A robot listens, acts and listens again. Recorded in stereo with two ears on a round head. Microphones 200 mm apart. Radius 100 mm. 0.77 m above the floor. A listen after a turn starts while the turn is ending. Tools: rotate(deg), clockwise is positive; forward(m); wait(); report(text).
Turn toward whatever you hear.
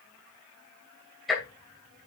rotate(-30)
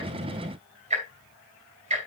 rotate(30)
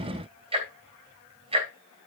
rotate(25)
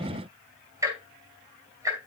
rotate(15)
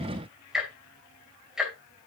report("Facing the ticking, 2 to 4 m away.")